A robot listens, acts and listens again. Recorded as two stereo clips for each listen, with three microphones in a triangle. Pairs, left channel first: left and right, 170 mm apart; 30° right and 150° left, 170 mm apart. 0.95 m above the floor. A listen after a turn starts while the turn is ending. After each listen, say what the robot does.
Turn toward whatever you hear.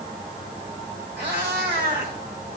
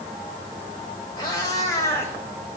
Turn 105° right.
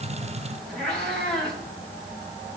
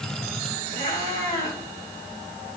Found it: a cat meowing, straight ahead, 2 to 4 m away.